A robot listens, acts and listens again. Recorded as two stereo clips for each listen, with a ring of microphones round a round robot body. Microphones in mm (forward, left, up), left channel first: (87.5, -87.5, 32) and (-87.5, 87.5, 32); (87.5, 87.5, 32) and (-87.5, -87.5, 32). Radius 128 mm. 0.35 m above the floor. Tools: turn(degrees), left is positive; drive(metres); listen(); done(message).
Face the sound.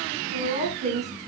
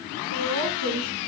turn(degrees=-165)
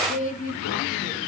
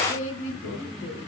turn(degrees=10)
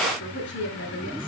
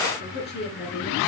done("Facing the woman speaking, over 4 m away.")